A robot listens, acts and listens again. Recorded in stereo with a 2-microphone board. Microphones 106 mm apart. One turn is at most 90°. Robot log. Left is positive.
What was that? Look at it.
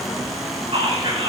note: The whispering: about 75° right or 105° right.
cmd yaw -75
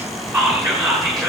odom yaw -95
end: Found it: whispering, straight ahead, over 4 m away.